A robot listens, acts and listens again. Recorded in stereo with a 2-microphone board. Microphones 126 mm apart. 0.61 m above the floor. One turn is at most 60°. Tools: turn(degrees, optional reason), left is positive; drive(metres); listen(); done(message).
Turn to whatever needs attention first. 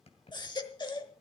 turn(degrees=40, reason="The baby crying: about 40° left or 140° left.")
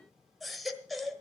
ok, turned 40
done("Facing the baby crying.")